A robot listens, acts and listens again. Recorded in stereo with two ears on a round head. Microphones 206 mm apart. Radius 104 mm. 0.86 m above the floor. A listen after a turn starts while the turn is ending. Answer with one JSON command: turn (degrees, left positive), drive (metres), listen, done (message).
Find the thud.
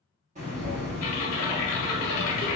{"turn": -55}
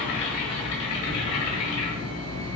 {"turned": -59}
{"listen": true}
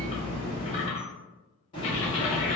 {"done": "I heard a thud, but can't make it out now. It was about straight ahead or 65° right."}